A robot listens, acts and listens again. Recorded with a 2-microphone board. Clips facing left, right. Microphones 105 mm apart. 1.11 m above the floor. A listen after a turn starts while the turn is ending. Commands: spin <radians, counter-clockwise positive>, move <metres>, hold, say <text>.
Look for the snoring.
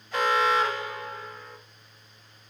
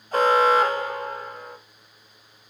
hold
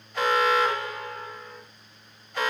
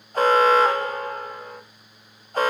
hold
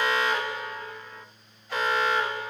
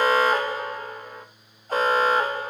say I can't make out snoring, only an alarm.